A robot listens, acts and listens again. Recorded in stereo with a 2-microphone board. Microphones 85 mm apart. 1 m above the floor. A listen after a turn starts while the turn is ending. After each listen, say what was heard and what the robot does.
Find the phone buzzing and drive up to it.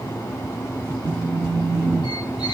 Turn 30° right.
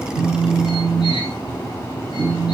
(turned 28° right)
So it is at 20° left. Turn 20° left.
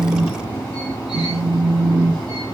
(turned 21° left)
Drive 1.0 m forward.
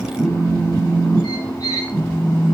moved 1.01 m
Drive 1.0 m forward.
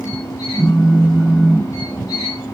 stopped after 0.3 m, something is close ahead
Arrived at the phone buzzing, straight ahead.